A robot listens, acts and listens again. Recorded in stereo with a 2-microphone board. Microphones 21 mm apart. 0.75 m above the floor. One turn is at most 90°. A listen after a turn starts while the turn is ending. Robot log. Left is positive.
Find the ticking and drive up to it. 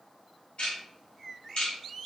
note: The ticking: about 70° left or 110° left.
cmd yaw +70
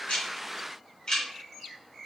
note: So it is at 35° left.
cmd yaw +35
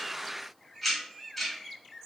cmd fwd 1.0
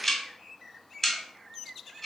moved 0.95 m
note: The ticking is now 15° left.
cmd yaw +15
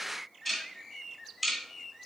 cmd fwd 1.0
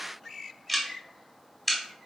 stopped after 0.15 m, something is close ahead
end: Arrived at the ticking, straight ahead.